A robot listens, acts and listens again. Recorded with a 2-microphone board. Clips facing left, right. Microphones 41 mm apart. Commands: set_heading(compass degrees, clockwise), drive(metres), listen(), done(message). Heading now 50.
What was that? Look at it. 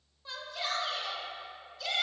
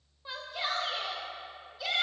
set_heading(70)
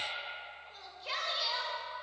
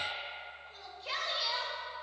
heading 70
done("Found it: a shout, straight ahead.")